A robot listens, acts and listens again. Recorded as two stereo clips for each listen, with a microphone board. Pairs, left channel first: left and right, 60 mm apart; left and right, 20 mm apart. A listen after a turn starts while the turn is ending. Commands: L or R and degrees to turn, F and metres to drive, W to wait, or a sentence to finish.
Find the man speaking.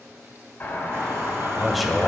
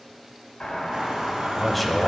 L30
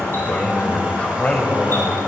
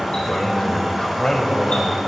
L150
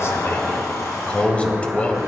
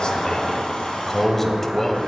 L25
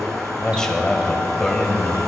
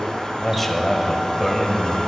L10
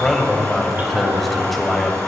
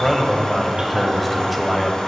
Facing the man speaking, 1 to 2 m away.